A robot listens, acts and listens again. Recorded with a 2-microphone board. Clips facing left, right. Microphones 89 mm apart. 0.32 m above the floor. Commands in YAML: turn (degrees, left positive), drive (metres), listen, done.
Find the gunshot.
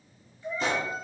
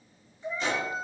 turn: 50
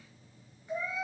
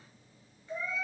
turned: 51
listen: true
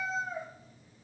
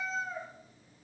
done: "I heard a gunshot, but can't make it out now. It was about straight ahead or 80° left."